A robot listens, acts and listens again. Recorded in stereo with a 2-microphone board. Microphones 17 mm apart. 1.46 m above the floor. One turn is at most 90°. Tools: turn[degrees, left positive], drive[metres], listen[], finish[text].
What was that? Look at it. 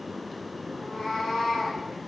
Thought: The cat meowing: about 45° left or 135° left.
Action: turn[45]
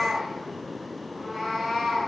Action: finish[Facing the cat meowing, over 4 m away.]